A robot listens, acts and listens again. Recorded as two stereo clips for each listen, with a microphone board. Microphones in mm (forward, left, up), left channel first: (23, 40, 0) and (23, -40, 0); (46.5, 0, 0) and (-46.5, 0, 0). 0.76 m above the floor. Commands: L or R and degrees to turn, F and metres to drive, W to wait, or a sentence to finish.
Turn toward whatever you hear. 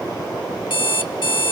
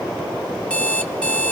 L80
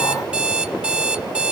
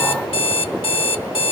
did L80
R15
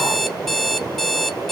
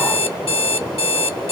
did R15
Found it: an alarm clock, straight ahead, under 1 m away.